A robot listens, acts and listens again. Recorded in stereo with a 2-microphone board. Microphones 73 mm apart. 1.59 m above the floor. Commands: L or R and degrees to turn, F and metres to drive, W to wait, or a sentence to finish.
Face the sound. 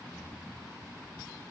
W
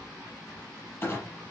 L25
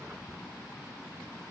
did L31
W
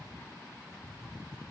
I heard a clunk, but can't make it out now. It was about 5° right or 125° left.